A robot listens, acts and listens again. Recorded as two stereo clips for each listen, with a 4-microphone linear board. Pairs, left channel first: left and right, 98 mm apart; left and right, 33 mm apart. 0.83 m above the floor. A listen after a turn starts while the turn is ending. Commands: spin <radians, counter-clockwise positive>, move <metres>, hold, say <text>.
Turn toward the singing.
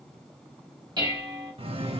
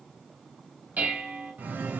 spin -1.57
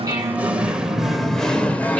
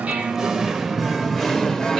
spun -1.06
spin 0.35
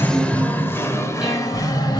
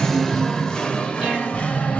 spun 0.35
spin 0.79
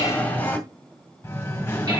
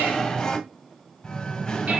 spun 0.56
spin 0.44
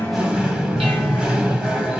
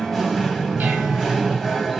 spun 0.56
say Found it: singing, straight ahead.